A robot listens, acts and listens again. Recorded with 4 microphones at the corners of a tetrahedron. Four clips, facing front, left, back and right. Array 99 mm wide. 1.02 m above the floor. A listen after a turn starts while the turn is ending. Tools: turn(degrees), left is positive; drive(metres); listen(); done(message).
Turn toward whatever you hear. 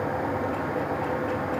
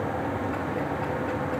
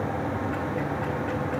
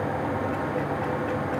listen()
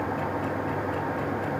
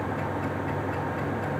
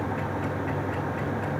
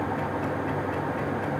listen()
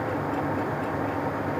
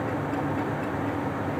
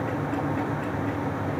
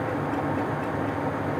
done("I can't make out anything.")